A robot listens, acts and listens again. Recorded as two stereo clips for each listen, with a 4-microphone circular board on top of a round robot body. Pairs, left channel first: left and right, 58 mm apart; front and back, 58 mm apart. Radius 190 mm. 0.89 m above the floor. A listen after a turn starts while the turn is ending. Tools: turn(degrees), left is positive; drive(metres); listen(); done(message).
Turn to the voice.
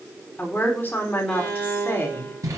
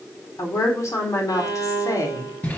turn(degrees=35)
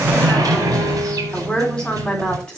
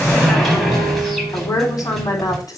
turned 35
turn(degrees=15)
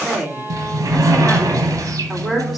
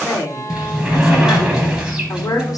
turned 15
done("Found it: a woman speaking, straight ahead, over 4 m away.")